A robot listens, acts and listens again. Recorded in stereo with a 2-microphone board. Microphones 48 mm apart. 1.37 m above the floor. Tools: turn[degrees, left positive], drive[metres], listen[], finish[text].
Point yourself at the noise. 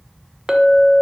Action: turn[-30]
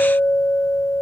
Thought: So it is at 20° left.
Action: turn[20]
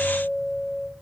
Action: finish[Found it: a clink, straight ahead.]